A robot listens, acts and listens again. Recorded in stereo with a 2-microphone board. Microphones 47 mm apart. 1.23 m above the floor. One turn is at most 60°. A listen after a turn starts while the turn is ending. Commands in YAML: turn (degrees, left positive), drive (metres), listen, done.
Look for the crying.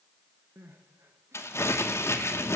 turn: -60
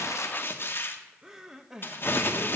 turn: -10
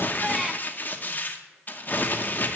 listen: true
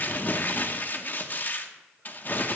listen: true
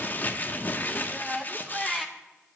done: "Found it: crying, straight ahead, under 1 m away."